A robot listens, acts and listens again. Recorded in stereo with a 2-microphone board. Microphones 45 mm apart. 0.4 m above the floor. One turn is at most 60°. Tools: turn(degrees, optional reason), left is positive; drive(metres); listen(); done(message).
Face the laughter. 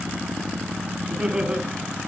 turn(degrees=-25, reason="The laughter: about 25° right or 155° right.")
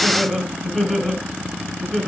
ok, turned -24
turn(degrees=15, reason="So it is at 15° left.")
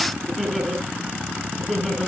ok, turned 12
turn(degrees=10, reason="The laughter is now 10° left.")
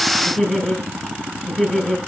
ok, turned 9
done("Facing the laughter.")